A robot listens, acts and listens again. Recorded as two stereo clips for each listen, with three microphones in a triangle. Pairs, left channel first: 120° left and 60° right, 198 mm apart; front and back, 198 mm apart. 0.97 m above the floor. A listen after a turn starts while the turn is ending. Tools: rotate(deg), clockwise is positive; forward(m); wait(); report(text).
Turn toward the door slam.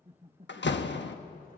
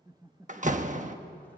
rotate(-130)
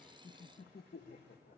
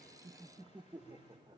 report("Facing where the door slam came from. I can't hear it now.")